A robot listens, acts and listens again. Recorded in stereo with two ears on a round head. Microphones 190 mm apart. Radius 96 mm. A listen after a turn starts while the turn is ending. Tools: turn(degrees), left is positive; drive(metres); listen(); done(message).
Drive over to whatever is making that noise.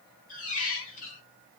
turn(degrees=40)
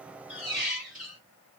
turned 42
drive(metres=1.0)
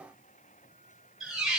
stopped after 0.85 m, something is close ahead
done("Arrived at the squeak, straight ahead.")